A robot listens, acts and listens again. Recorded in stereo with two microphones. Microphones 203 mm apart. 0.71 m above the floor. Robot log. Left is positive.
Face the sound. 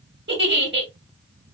note: The giggle: about 60° right or 120° right.
cmd yaw -60
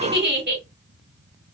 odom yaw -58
note: So it is at 60° right.
cmd yaw -60
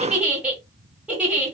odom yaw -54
end: Found it: a giggle, straight ahead, 1 to 2 m away.